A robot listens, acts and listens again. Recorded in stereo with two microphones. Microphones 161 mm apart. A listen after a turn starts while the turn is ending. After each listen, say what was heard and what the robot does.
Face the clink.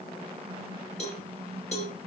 Keep listening.
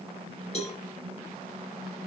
Keep listening.
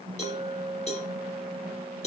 The clink: about 25° right or 155° right. Turn 25° right.
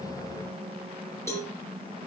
Keep listening.
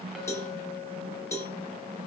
Found it: a clink, straight ahead, 2 to 4 m away.